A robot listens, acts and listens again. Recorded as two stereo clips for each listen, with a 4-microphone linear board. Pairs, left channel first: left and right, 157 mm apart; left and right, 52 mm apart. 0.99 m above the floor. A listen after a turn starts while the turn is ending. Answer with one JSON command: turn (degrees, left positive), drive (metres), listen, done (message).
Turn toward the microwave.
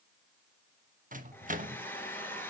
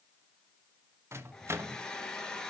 {"turn": -55}
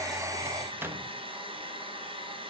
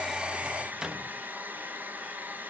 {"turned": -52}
{"turn": -15}
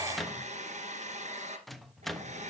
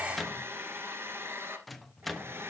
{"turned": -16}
{"done": "Facing the microwave, 1 to 2 m away."}